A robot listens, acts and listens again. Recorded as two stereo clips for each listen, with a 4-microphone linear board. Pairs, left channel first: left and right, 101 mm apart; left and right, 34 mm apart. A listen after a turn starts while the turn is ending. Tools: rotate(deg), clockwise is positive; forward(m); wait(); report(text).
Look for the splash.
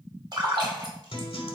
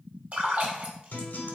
rotate(50)
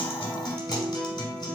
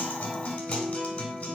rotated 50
wait()
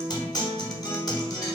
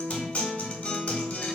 report("I heard a splash, but can't make it out now. It was about straight ahead or 80° right.")